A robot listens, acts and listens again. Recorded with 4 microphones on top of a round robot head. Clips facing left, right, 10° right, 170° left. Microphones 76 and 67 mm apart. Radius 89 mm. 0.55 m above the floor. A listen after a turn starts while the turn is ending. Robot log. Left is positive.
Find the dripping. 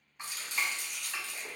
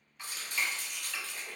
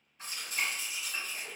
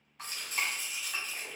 note: The dripping: 155° left.
cmd yaw +155
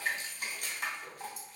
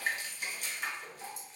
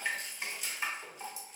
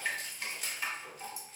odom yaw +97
note: The dripping is now 60° left.
cmd yaw +60
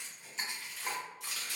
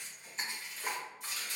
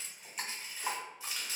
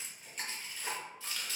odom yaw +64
end: Found it: dripping, straight ahead, 1 to 2 m away.